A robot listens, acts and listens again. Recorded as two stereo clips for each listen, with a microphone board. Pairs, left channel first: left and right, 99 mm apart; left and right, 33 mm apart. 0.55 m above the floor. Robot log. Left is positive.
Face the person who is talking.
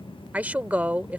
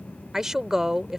note: The woman speaking: about 15° right or 165° right.
cmd yaw -15
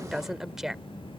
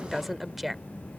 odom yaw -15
end: Found it: a woman speaking, straight ahead.